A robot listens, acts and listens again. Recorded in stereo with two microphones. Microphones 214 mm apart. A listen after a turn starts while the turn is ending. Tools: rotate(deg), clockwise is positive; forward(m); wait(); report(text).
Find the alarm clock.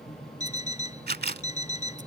rotate(-35)
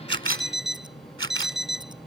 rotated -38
report("Facing the alarm clock.")